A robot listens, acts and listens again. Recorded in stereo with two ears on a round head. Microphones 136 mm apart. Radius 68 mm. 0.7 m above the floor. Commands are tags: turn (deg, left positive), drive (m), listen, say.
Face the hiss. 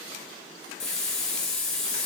<turn deg="30"/>
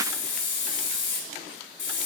<turn deg="145"/>
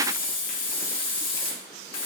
<turn deg="35"/>
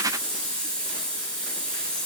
<say>Found it: a hiss, straight ahead, 1 to 2 m away.</say>